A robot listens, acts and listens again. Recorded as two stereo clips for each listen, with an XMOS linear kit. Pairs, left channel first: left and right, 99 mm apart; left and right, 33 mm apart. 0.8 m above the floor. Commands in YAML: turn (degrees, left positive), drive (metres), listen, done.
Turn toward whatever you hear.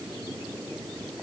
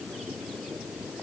listen: true
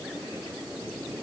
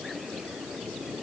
listen: true
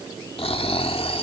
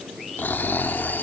turn: 70
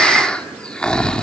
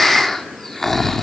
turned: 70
turn: 10
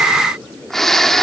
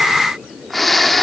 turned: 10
done: "Facing the snoring, 1 to 2 m away."